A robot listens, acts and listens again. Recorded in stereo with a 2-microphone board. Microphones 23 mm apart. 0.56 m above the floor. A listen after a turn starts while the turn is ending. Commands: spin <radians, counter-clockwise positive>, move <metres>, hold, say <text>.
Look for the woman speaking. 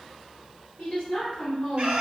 spin 0.96
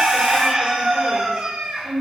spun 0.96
say Facing the woman speaking.